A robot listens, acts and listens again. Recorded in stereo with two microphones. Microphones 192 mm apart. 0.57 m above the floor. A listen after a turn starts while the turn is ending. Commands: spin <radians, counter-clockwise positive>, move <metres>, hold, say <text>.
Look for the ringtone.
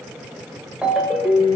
spin -0.52
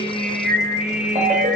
spin -2.53
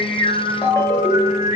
spin 0.26
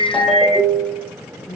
say Facing the ringtone, under 1 m away.